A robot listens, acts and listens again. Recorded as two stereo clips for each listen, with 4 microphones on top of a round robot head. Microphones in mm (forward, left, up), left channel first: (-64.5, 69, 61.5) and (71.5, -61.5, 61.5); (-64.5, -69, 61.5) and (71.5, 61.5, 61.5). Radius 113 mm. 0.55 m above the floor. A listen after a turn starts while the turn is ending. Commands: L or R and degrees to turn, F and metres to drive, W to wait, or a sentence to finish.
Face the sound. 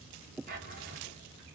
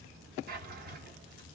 Facing the drawer, 2 to 4 m away.